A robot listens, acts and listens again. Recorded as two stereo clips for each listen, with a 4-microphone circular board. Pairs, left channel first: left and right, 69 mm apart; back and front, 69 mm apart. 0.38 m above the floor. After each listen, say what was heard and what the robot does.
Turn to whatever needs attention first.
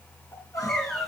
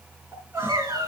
The crying: 50° left. Turn 50° left.
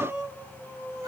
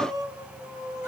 The crying is now 10° right. Turn 10° right.
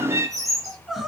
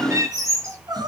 Found it: crying, straight ahead.